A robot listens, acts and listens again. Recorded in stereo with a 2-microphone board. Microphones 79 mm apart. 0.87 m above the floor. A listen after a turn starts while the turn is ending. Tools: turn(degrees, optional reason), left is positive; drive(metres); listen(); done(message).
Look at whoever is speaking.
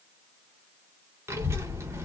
turn(degrees=-35, reason="The child speaking: about 35° right or 145° right.")
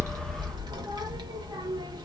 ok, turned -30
turn(degrees=-115, reason="So it is at 115° right.")
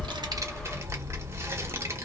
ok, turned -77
turn(degrees=-35, reason="The child speaking is now 35° right.")
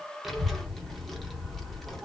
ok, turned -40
done("Facing the child speaking.")